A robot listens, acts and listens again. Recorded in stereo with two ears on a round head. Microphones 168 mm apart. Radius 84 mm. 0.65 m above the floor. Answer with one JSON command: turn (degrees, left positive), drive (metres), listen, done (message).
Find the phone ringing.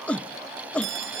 {"turn": -65}
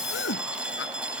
{"done": "Found it: a phone ringing, straight ahead."}